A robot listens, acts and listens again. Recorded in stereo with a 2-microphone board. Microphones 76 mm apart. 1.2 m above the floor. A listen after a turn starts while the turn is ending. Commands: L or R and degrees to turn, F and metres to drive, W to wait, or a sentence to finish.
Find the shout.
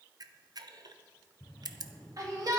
R50
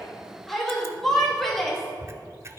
Found it: a shout, straight ahead, 2 to 4 m away.